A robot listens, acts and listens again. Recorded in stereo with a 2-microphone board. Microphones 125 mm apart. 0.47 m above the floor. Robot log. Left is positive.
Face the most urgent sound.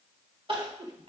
note: The crying: about 45° right or 135° right.
cmd yaw -45
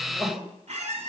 note: So it is at 10° right.
cmd yaw -10
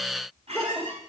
end: Facing the crying.